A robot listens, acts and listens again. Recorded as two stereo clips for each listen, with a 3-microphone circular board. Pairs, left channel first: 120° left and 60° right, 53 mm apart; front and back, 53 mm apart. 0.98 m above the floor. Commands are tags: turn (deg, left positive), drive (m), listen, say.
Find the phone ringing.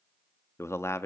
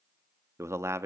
<listen/>
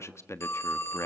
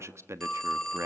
<turn deg="80"/>
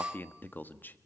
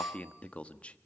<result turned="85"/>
<say>Found it: a phone ringing, straight ahead.</say>